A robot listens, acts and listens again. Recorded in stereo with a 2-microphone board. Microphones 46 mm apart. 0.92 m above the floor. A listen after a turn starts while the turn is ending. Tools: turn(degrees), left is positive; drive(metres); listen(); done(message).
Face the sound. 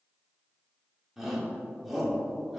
turn(degrees=-30)
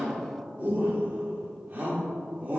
turn(degrees=-145)
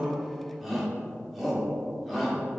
done("Facing the shout, 2 to 4 m away.")